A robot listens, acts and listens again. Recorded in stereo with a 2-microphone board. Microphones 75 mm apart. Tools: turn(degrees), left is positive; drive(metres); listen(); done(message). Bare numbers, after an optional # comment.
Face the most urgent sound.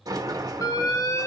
# The alarm: about 50° left or 130° left.
turn(50)
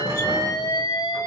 # So it is at 75° left.
turn(75)
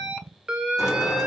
# The alarm is now 10° right.
turn(-10)
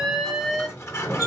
done("Facing the alarm.")